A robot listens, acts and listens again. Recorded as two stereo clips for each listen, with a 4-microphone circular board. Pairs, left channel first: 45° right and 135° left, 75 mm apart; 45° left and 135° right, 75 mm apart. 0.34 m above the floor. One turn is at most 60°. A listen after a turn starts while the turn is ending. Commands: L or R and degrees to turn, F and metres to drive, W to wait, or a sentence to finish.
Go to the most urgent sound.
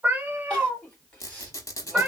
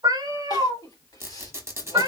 L35
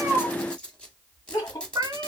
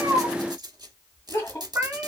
F1.0
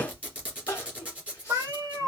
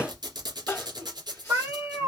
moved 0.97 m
R10
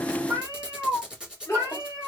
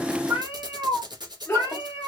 F1.0
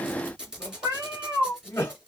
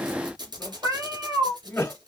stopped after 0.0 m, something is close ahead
I am next to the crying.